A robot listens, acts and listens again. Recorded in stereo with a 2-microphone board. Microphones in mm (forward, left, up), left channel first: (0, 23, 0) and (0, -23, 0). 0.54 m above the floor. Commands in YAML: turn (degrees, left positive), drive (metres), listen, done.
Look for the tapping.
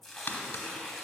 turn: 45
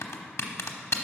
turn: 90
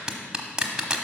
turn: -15
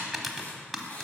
done: "Found it: tapping, straight ahead."